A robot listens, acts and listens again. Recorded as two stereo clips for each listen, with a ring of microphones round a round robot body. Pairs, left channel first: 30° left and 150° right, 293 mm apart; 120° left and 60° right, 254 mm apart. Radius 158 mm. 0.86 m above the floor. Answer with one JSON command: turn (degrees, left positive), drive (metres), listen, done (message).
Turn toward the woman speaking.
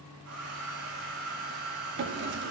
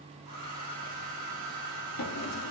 {"listen": true}
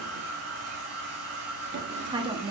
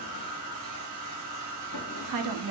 {"turn": -80}
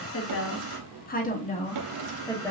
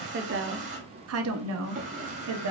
{"turn": -50}
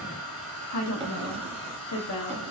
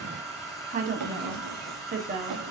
{"done": "Facing the woman speaking."}